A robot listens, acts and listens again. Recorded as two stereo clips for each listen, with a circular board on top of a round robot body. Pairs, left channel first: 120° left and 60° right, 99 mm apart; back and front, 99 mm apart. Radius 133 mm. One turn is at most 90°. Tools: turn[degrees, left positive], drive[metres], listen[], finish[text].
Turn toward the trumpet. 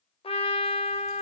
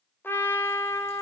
Thought: The trumpet: 110° left.
Action: turn[90]
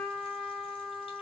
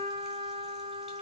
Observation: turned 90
Thought: The trumpet is now 25° left.
Action: turn[25]
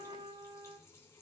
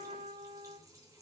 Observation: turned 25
Thought: The trumpet is now 10° right.
Action: turn[-10]
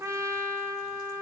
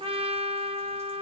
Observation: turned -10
Action: finish[Facing the trumpet, 2 to 4 m away.]